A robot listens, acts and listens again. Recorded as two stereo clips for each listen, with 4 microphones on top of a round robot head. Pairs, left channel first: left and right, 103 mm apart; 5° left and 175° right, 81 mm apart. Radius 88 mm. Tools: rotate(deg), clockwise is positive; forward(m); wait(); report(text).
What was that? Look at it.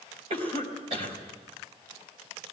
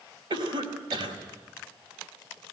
rotate(130)
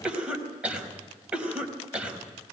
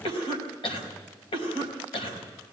rotate(10)
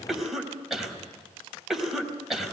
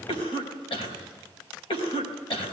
report("Facing the cough.")